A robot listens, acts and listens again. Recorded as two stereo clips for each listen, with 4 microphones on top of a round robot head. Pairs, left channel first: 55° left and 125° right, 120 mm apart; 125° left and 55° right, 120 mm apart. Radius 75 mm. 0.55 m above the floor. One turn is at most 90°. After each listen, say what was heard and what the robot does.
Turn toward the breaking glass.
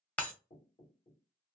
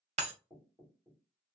The breaking glass: 25° right. Turn 25° right.
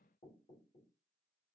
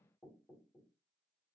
I heard breaking glass from this way, but can't make it out now.